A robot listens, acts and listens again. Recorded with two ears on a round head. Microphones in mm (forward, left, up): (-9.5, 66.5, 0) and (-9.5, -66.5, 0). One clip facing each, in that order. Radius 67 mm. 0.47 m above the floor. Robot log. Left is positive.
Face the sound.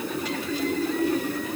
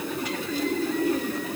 cmd idle
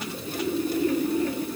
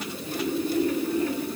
cmd idle
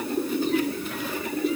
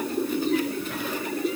end: I can't make out anything.